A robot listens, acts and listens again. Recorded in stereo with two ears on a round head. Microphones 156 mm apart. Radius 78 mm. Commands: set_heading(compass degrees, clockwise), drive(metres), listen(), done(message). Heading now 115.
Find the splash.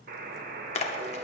set_heading(75)
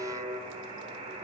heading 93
listen()
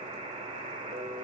done("I heard a splash, but can't make it out now. It was about 15° left or 120° left.")